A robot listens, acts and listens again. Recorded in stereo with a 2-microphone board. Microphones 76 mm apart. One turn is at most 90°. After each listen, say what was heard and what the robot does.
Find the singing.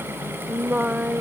Turn 30° right.
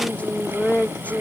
So it is at 20° left. Turn 20° left.
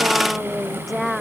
Facing the singing.